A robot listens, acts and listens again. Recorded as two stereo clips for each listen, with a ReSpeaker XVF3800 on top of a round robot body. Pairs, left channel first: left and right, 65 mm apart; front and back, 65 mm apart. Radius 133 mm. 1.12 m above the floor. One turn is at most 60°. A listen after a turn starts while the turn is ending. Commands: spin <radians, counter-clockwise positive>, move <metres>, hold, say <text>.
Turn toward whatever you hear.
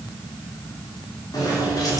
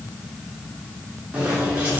spin 1.05
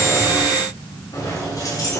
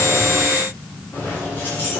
spin 1.05
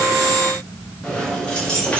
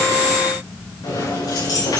spin 0.26
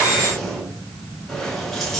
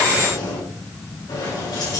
say Found it: keys jangling, straight ahead, over 4 m away.